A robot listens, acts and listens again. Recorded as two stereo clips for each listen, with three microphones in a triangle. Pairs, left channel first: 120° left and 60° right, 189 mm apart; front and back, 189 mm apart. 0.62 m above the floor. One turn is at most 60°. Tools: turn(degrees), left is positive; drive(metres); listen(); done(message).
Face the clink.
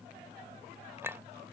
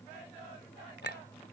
turn(degrees=20)
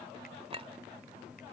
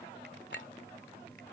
done("Facing the clink.")